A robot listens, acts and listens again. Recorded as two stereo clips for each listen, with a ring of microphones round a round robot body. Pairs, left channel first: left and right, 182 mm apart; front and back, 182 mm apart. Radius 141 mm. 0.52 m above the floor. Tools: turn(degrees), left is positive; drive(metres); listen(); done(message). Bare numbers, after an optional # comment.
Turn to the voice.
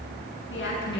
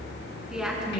# The woman speaking: 95° left.
turn(95)
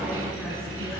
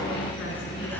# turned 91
listen()
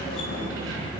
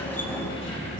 listen()
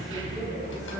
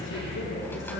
done("Facing where the woman speaking came from. I can't hear it now.")